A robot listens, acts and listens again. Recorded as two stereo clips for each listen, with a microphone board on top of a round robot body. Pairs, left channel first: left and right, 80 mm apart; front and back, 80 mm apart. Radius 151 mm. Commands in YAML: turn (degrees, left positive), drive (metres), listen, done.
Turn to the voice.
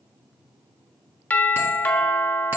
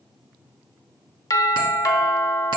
listen: true
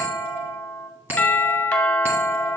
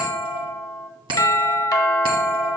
listen: true
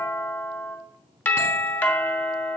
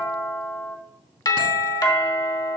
done: "I can't make out anyone speaking, only a bell and a doorbell."